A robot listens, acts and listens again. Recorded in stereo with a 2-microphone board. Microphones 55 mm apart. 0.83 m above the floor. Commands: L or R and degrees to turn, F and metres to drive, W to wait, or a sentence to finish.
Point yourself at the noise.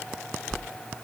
L30
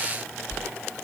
L140
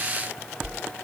R30
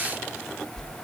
Facing the whoosh, 1 to 2 m away.